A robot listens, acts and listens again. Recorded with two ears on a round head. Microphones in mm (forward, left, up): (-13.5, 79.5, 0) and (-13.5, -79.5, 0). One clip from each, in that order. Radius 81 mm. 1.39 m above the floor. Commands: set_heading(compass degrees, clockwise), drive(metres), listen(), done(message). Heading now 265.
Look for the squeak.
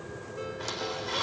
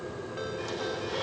set_heading(210)
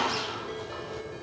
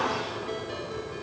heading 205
set_heading(140)
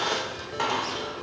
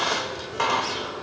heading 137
done("Facing the squeak.")